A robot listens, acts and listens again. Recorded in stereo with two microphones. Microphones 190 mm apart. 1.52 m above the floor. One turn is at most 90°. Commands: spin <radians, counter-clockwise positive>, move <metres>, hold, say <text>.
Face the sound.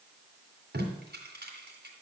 spin -1.05
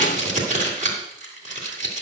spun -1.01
spin -0.79
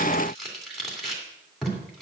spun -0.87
say Found it: tape being pulled, straight ahead.